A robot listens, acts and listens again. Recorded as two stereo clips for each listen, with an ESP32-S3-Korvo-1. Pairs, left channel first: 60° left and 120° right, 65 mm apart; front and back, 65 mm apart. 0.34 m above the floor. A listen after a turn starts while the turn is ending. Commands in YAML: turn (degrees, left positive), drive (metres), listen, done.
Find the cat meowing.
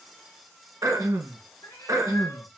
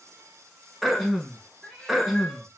turn: 80
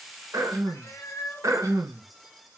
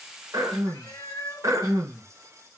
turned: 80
turn: 15
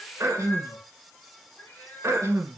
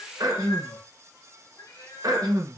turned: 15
done: "Found it: a cat meowing, straight ahead."